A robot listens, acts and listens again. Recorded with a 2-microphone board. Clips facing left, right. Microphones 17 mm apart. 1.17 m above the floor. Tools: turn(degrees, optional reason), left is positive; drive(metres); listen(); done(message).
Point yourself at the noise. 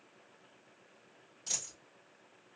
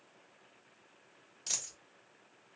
turn(degrees=-20, reason="The dropped coin: about 20° right or 160° right.")
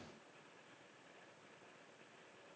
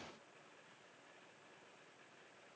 listen()
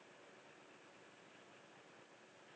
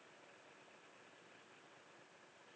done("I heard a dropped coin, but can't make it out now. It was about straight ahead or 140° right.")